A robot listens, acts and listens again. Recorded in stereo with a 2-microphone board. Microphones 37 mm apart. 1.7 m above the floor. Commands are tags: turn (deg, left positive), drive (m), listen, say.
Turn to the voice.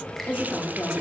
<turn deg="90"/>
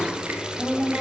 <say>Facing the woman speaking.</say>